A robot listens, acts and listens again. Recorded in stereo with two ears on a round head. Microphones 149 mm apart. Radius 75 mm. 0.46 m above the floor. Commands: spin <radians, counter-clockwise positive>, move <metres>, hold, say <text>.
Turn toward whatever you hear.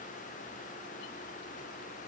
hold
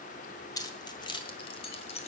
spin 0.70
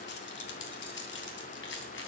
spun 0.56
spin 1.75
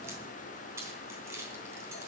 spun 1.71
spin -0.26
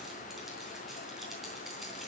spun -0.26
hold
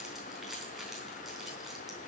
say Found it: keys jangling, straight ahead, 2 to 4 m away.